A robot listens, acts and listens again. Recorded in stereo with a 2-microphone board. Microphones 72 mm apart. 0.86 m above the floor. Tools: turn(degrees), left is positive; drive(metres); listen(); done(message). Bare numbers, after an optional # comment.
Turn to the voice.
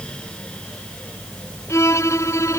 listen()
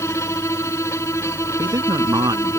# The man speaking: about 55° right or 125° right.
turn(-55)
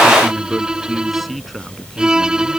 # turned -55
done("Found it: a man speaking, straight ahead.")